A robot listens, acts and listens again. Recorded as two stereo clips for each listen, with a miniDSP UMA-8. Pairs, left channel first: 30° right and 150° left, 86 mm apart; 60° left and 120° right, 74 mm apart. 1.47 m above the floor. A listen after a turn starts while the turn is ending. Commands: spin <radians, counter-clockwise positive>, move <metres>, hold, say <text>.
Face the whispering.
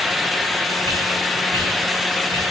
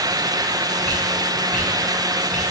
spin 2.27
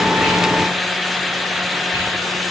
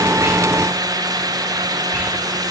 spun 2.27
hold
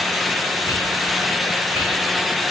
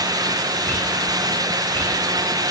say Facing the whispering, 2 to 4 m away.